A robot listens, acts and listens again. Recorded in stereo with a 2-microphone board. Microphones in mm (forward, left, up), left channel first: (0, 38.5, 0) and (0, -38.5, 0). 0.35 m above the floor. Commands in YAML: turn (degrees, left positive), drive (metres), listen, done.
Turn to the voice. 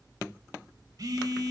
listen: true
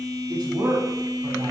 turn: -60
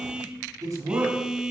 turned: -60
turn: -55
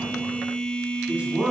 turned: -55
turn: -20
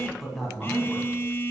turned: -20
done: "Found it: a man speaking, straight ahead."